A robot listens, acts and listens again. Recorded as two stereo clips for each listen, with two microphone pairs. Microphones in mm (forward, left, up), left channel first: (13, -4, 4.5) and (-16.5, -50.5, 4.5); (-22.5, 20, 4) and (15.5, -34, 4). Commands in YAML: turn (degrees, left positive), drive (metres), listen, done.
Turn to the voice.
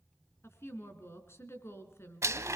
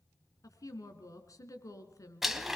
turn: 95
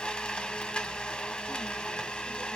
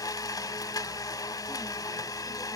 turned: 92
listen: true
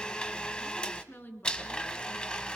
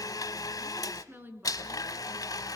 done: "Facing the woman speaking."